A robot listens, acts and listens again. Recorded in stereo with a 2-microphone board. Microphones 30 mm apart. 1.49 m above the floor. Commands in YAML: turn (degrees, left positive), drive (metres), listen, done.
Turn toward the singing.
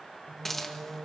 turn: -65
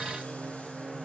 turn: -30
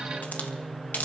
done: "Facing the singing."